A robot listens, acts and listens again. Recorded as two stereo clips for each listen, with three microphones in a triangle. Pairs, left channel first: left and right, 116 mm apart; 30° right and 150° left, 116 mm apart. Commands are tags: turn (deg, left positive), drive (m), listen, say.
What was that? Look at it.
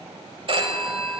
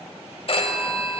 <turn deg="-60"/>
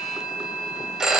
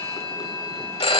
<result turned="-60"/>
<say>Found it: a phone ringing, straight ahead, 1 to 2 m away.</say>